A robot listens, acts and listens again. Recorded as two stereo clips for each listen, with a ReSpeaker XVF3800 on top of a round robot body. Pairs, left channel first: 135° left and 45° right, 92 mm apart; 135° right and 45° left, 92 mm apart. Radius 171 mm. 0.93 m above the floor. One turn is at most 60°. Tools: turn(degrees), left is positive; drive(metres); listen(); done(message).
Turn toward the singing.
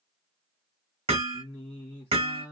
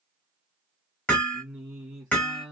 turn(degrees=60)
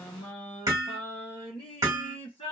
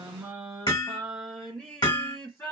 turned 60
turn(degrees=60)
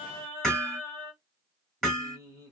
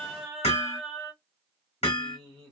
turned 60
turn(degrees=60)
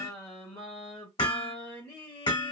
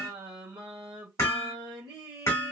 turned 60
turn(degrees=60)
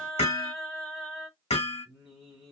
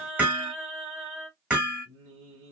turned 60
turn(degrees=45)
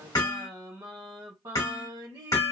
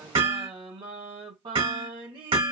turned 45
done("Found it: singing, straight ahead.")